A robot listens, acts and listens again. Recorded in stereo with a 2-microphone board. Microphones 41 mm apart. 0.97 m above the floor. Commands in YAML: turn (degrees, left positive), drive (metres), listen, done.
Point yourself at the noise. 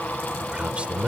turn: -30
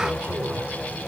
listen: true
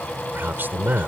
turn: -120
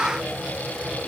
listen: true
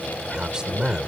turn: -20
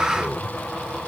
listen: true
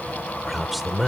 done: "Found it: a man speaking, straight ahead."